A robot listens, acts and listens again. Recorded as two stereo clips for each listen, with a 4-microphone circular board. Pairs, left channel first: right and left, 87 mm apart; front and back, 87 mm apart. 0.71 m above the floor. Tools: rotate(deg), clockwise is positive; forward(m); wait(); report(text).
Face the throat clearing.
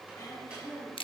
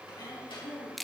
rotate(40)
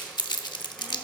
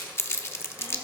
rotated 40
wait()
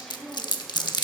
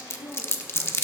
rotate(10)
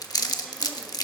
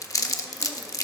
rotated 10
wait()
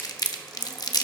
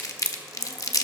wait()
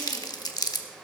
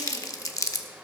report("Facing where the throat clearing came from. I can't hear it now.")